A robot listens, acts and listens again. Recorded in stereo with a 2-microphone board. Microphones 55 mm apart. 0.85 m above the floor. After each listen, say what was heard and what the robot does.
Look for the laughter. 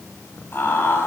The laughter: about 40° left or 140° left. Turn 40° left.
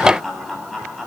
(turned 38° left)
Found it: laughter, straight ahead.